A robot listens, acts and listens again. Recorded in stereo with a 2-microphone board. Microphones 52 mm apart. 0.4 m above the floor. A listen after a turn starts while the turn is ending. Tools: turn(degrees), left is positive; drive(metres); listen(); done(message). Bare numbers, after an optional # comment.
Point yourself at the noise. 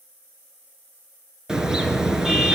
turn(-30)
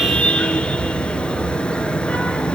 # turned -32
# So it is at 20° left.
turn(20)
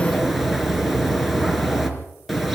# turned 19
done("Facing the car horn, 2 to 4 m away.")